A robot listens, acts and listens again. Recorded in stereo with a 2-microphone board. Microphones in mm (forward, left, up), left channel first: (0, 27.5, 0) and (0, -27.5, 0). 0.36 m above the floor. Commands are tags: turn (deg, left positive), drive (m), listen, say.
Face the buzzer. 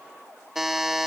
<turn deg="-30"/>
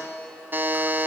<turn deg="-140"/>
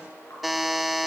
<say>Facing the buzzer.</say>